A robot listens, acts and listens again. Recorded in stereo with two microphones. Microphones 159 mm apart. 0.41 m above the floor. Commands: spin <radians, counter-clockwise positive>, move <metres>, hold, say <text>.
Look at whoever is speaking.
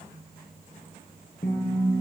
hold
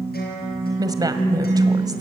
spin -0.44
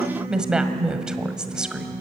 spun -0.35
say Facing the woman speaking.